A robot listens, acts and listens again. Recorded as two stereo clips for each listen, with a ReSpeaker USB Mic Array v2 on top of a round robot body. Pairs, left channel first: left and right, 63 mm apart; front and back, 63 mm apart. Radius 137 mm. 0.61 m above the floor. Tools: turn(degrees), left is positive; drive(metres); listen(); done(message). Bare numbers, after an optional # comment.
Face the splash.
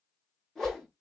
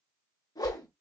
listen()
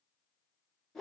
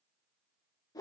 listen()
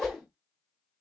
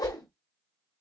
done("I can't make out a splash to turn to.")